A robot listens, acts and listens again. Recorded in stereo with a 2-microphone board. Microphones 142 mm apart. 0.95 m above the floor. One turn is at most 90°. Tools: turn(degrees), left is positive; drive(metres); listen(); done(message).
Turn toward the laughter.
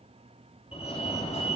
listen()
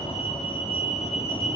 listen()
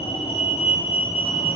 done("I can't make out laughter to turn to.")